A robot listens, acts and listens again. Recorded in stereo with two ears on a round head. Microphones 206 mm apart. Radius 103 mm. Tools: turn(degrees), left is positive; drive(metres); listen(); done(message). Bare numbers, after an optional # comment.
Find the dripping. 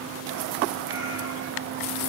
listen()
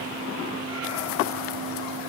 listen()
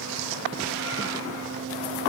done("I can't make out dripping.")